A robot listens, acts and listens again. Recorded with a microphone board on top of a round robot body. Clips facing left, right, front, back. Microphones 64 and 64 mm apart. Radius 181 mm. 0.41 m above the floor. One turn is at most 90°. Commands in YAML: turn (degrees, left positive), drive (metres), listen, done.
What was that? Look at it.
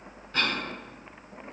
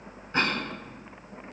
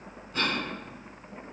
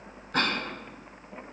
turn: -90
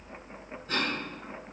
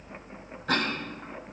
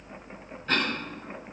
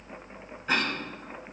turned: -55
turn: -90
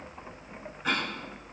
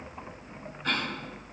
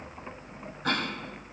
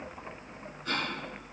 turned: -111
done: "Found it: a cough, straight ahead."